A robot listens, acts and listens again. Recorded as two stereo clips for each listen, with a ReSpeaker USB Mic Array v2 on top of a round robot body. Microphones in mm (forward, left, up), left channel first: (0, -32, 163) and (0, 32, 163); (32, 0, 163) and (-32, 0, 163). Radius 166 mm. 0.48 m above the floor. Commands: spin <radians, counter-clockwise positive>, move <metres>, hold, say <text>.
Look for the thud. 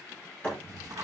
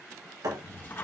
spin -2.79
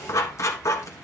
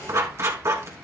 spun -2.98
spin 0.17
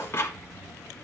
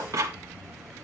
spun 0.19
say Facing where the thud came from. I can't hear it now.